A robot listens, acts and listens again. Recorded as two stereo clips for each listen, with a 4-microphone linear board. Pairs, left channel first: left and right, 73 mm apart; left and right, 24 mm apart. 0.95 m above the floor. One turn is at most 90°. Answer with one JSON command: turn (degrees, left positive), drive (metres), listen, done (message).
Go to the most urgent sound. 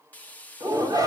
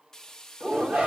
{"turn": -55}
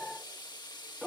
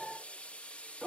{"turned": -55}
{"drive": 1.0}
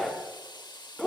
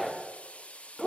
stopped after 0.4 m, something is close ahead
{"done": "Blocked. The shout is further on, straight ahead."}